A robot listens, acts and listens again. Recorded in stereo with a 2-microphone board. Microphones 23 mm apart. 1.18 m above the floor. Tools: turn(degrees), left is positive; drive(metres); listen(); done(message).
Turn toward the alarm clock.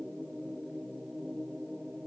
listen()
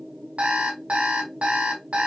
turn(degrees=-70)
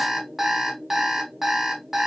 turn(degrees=-25)
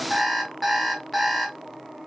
turn(degrees=-10)
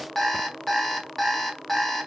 done("Facing the alarm clock, 1 to 2 m away.")